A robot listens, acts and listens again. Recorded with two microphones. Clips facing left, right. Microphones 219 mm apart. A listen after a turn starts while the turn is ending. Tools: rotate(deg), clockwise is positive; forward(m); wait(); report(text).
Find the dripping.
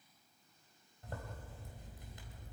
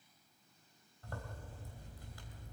wait()
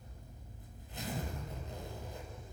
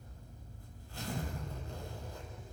wait()
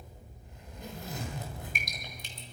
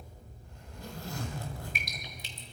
rotate(-50)
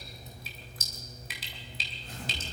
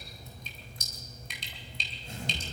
report("Found it: dripping, straight ahead.")